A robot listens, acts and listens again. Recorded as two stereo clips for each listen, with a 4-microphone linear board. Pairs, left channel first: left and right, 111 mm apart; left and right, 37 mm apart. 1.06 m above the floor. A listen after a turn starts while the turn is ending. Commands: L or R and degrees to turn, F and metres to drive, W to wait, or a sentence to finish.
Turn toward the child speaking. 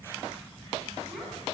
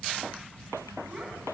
R30
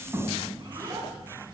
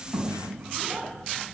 R145
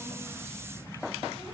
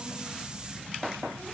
W
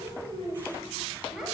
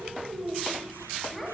Facing the child speaking.